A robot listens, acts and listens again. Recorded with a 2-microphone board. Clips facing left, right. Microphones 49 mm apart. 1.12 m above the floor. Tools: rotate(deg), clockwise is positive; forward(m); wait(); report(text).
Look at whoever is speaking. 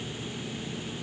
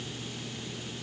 wait()
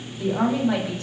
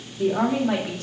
rotate(90)
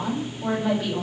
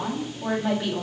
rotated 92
report("Found it: a woman speaking, straight ahead.")